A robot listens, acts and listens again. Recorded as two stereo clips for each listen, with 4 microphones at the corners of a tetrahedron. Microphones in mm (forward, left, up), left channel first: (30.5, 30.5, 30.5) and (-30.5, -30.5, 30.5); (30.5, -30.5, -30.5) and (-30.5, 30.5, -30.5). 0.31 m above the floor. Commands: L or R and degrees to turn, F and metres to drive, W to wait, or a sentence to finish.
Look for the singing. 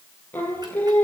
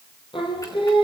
R25
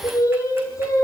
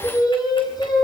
Facing the singing, over 4 m away.